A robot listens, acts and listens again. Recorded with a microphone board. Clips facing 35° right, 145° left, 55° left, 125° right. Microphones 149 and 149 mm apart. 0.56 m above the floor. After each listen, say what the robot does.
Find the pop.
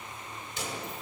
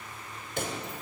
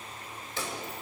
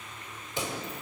Turn 165° left.
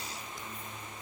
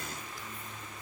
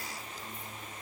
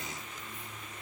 I heard a pop from this way, but can't make it out now.